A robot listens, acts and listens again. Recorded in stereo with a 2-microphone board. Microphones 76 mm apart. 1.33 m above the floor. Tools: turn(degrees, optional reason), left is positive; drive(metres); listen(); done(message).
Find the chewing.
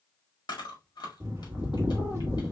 turn(degrees=70, reason="The chewing: about 70° left or 110° left.")
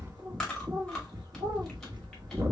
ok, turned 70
done("Found it: chewing, straight ahead.")